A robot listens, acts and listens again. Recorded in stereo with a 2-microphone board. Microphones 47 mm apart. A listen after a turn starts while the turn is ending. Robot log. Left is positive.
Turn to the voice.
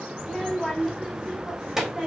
cmd yaw -30
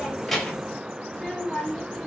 end: Facing the child speaking, 2 to 4 m away.